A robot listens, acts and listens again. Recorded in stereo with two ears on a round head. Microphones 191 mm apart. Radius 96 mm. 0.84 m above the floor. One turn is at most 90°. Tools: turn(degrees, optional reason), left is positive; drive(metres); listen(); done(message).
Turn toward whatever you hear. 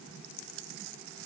listen()
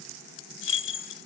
turn(degrees=60, reason="The keys jangling: about 60° left or 120° left.")
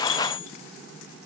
turn(degrees=60, reason="So it is at 60° left.")
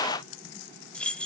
done("Facing the keys jangling.")